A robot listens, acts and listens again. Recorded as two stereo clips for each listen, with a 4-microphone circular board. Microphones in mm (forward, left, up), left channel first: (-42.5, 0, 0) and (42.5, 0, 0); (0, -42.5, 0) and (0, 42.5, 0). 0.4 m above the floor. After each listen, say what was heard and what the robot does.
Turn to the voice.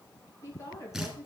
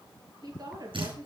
The woman speaking: 125° left. Turn 125° left.
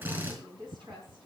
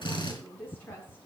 The woman speaking is now 25° right. Turn 25° right.
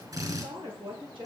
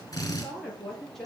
Facing the woman speaking.